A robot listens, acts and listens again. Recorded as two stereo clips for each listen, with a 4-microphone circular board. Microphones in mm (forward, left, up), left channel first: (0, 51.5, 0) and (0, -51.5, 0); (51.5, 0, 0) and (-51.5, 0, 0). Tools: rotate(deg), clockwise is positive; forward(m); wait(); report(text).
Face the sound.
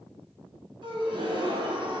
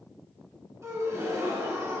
rotate(120)
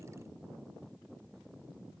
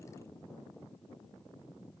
report("Facing where the gasp came from. I can't hear it now.")